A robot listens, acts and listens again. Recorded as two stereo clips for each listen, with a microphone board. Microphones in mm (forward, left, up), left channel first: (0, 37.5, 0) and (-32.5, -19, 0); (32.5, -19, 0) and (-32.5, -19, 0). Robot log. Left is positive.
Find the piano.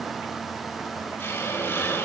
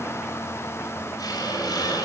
cmd idle
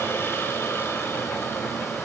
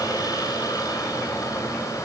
cmd idle
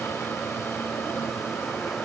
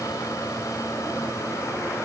end: I can't make out a piano, only a hiss.